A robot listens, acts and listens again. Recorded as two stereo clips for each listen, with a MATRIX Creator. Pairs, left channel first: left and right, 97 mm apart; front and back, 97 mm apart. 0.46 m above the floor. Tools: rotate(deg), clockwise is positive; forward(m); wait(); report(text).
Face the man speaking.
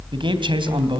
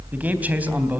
rotate(110)
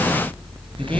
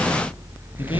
wait()
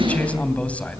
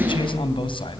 rotate(-15)
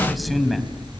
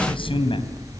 report("Found it: a man speaking, straight ahead, 2 to 4 m away.")